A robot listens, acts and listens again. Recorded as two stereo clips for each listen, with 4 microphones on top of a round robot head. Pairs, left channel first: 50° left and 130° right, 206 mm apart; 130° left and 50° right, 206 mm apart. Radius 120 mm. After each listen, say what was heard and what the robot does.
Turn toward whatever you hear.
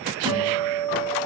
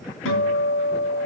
The guitar: 155° left. Turn 155° left.
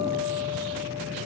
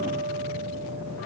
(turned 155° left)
Keep listening.
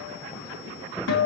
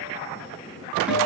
The guitar is now 35° left. Turn 35° left.
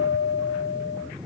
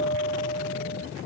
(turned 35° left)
The guitar is now 20° left. Turn 20° left.
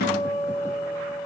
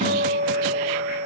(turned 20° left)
Facing the guitar, 2 to 4 m away.